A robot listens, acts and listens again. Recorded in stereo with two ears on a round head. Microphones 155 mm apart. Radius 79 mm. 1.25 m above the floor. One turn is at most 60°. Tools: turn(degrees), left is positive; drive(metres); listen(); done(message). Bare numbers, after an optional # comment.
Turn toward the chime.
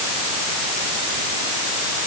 listen()
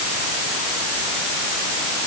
listen()
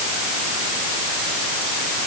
done("I can't make out a chime to turn to.")